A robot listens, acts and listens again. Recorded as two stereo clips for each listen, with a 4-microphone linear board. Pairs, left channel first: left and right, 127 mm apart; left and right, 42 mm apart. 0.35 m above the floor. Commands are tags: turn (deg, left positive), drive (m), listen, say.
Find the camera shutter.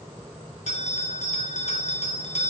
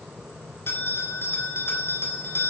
<listen/>
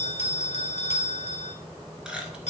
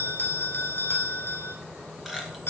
<listen/>
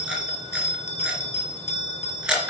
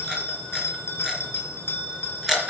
<turn deg="-30"/>
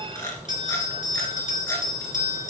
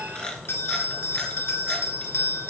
<turn deg="25"/>
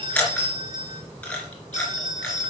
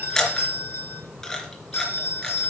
<turn deg="10"/>
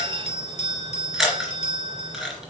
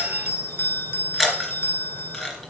<say>Found it: a camera shutter, straight ahead.</say>